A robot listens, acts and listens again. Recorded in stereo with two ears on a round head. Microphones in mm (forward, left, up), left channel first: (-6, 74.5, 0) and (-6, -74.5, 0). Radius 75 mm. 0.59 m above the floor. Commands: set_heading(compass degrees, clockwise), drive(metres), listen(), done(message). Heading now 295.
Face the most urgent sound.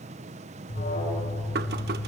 set_heading(235)
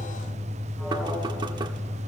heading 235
done("Found it: an alarm, straight ahead.")